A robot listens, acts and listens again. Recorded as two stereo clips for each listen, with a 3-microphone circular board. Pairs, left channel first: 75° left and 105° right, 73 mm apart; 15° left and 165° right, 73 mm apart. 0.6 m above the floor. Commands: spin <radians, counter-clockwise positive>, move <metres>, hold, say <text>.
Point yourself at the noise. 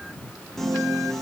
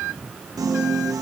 spin 2.79
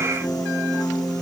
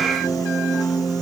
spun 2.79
spin 0.79
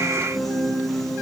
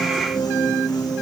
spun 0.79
spin -0.26
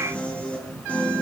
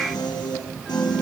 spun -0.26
say Facing the piano.